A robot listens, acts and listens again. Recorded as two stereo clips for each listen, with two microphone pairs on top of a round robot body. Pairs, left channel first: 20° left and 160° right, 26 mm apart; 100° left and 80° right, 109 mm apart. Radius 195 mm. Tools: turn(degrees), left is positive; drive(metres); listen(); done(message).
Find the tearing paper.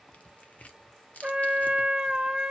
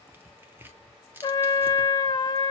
turn(degrees=-10)
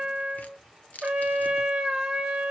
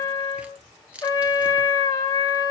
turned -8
done("Facing the tearing paper.")